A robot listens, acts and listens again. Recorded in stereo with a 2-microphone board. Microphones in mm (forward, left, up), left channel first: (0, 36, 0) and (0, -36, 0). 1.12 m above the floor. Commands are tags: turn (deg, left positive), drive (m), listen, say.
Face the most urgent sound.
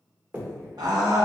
<turn deg="-75"/>
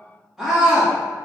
<say>Found it: a scream, straight ahead.</say>